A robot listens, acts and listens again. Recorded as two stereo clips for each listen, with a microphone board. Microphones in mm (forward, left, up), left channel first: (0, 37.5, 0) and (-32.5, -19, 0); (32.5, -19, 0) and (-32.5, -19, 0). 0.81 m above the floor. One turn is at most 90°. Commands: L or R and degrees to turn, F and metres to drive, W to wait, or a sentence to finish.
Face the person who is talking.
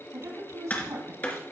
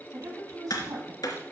R90
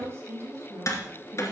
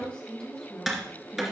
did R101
R85
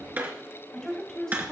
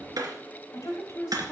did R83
R25
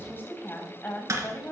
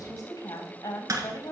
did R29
Facing the woman speaking, 2 to 4 m away.